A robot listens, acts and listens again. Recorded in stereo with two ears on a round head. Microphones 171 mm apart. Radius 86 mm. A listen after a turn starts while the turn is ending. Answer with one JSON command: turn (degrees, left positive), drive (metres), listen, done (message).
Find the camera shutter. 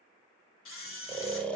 {"turn": 75}
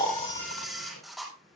{"done": "Found it: a camera shutter, straight ahead, 2 to 4 m away."}